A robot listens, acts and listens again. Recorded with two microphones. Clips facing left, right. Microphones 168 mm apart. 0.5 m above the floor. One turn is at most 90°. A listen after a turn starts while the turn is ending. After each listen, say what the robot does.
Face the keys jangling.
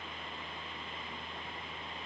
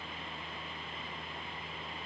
Keep listening.
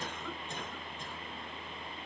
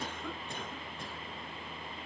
Keep listening.
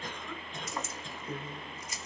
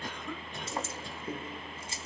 Turn 30° right.
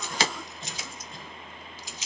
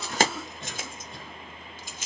Turn 90° right.
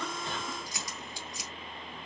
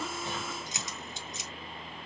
Turn 25° right.
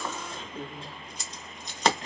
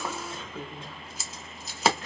Facing the keys jangling, under 1 m away.